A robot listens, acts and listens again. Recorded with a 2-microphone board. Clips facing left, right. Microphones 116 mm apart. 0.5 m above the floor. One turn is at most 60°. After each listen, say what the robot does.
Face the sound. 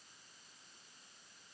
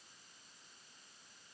Keep listening.
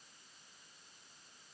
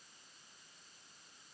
Keep listening.
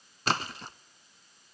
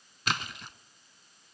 Turn 40° left.
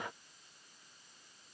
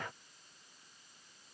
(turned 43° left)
Keep listening.
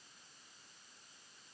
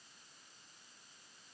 I heard a splash, but can't make it out now. It was about 5° right or 100° left.